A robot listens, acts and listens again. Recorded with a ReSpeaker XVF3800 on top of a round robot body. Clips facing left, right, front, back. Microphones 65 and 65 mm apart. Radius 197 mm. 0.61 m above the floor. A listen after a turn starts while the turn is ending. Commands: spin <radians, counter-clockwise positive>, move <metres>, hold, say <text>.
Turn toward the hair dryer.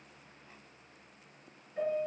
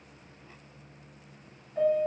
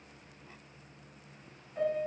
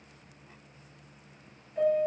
hold
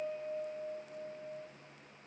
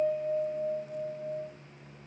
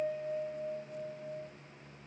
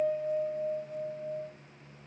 hold
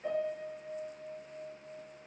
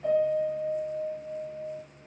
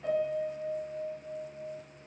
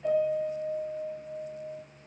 say I can't make out a hair dryer to turn to.